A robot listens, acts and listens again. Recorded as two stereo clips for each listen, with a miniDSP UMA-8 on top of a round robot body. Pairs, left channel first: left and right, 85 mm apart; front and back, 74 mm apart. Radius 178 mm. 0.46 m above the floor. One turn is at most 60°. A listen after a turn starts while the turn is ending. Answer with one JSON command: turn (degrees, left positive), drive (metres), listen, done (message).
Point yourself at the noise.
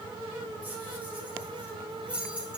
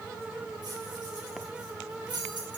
{"turn": -60}
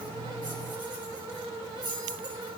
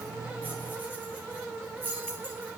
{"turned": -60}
{"turn": -60}
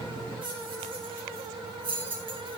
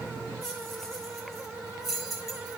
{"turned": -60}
{"turn": -60}
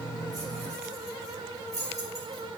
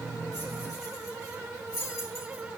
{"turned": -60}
{"turn": -40}
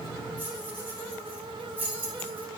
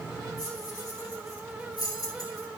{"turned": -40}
{"turn": -25}
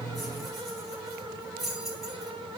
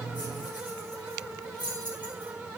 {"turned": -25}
{"done": "Facing the keys jangling, over 4 m away."}